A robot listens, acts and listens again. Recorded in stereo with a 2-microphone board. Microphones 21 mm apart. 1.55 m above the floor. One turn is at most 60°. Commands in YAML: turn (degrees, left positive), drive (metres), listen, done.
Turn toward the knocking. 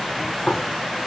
turn: 50
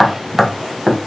done: "Found it: knocking, straight ahead, 1 to 2 m away."